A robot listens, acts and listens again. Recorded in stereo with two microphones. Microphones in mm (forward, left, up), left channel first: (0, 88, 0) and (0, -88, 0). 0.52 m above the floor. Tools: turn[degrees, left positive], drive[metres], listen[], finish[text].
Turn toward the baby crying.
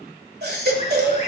Thought: The baby crying: about 65° right or 115° right.
Action: turn[-65]
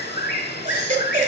Thought: So it is at 50° right.
Action: turn[-50]
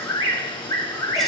Action: listen[]
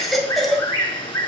Action: finish[Found it: a baby crying, straight ahead, 1 to 2 m away.]